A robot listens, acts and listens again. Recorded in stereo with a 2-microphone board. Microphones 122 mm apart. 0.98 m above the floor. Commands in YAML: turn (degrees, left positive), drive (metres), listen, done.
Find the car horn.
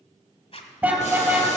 turn: -30
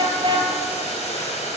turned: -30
turn: -140
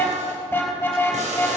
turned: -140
turn: 15
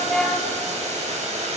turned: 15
done: "Facing the car horn."